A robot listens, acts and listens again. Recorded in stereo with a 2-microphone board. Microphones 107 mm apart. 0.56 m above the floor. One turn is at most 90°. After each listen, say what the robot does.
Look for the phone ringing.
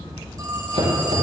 Turn 40° right.
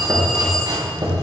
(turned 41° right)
Keep listening.
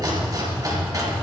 Keep listening.
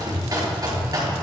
I heard a phone ringing, but can't make it out now. It was about straight ahead or 100° right.